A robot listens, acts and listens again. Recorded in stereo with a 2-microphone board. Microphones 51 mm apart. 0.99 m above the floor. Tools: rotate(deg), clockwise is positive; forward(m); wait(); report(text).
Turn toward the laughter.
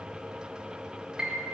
wait()
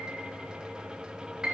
wait()
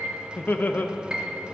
rotate(-35)
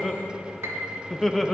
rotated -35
report("Found it: laughter, straight ahead.")